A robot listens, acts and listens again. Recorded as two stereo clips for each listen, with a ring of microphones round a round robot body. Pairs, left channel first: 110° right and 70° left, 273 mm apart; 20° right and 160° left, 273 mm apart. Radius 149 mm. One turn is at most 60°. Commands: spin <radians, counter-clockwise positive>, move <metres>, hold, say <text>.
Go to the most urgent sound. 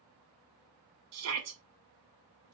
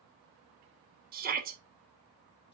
spin 1.05
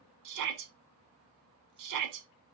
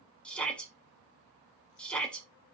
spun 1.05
spin 1.05
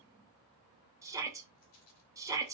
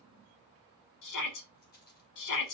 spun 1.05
spin -0.17
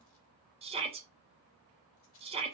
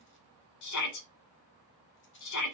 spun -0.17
move 1.0
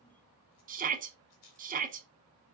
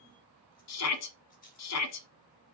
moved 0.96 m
move 1.0
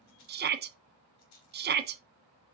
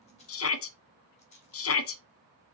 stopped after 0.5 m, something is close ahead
spin 0.26
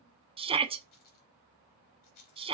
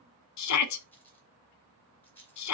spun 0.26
say I am next to the shout.